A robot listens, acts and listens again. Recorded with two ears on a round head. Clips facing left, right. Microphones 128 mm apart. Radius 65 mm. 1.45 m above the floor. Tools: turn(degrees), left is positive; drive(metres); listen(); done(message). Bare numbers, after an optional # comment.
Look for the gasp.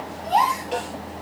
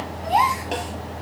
turn(-30)
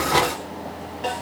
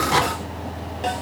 listen()
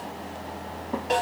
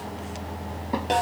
done("I heard a gasp, but can't make it out now. It was about 15° left or 135° right.")